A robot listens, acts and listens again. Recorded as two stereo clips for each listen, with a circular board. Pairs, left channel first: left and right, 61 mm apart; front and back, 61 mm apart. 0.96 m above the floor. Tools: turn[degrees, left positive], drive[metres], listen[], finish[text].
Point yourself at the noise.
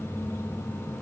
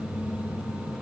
Action: listen[]
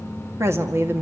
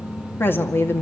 Thought: The woman speaking: 45° right.
Action: turn[-45]
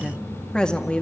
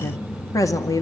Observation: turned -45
Thought: The woman speaking is now 20° left.
Action: turn[20]
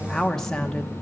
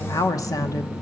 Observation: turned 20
Thought: The woman speaking is now 15° left.
Action: turn[15]
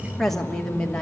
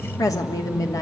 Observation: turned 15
Thought: The woman speaking is now 15° left.
Action: turn[15]
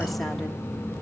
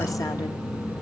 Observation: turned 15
Action: listen[]
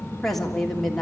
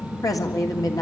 Action: finish[Facing the woman speaking, 2 to 4 m away.]